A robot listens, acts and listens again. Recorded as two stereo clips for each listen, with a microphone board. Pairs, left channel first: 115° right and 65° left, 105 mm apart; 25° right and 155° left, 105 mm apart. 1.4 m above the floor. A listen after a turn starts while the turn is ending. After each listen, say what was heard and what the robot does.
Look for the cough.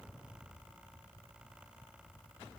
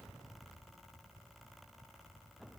Keep listening.
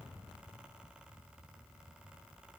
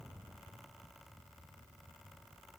Keep listening.
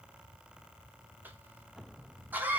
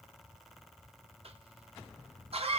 The cough: 140° left. Turn 140° left.
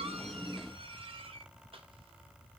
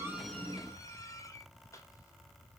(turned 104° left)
The cough is now 35° left. Turn 35° left.
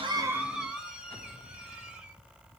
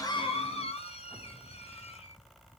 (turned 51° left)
The cough is now 15° right. Turn 15° right.
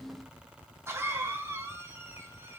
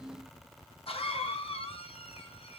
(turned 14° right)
Facing the cough.